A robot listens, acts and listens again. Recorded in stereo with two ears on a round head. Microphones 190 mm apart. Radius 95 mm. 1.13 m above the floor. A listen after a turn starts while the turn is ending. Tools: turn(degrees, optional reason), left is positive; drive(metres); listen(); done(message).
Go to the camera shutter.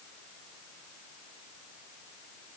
listen()
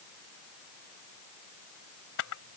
turn(degrees=70, reason="The camera shutter: about 70° left or 110° left.")
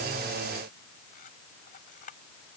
turn(degrees=40, reason="So it is at 40° left.")
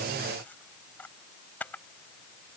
turn(degrees=10, reason="The camera shutter is now 10° left.")
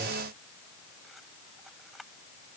drive(metres=1.0)
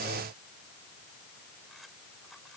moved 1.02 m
listen()
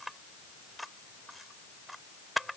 drive(metres=1.0)
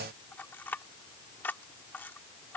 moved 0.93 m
turn(degrees=10, reason="The camera shutter is now 10° left.")
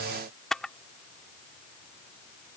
drive(metres=1.0)
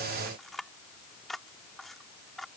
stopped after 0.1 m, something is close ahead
done("I am next to the camera shutter.")